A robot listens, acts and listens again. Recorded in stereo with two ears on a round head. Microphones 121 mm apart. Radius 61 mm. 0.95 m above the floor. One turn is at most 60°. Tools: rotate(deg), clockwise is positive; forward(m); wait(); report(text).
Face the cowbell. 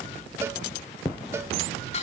wait()
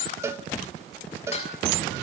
rotate(20)
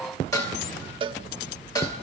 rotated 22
rotate(60)
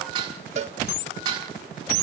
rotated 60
rotate(60)
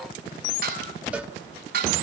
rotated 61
rotate(15)
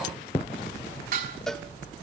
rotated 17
wait()
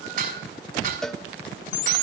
report("Facing the cowbell.")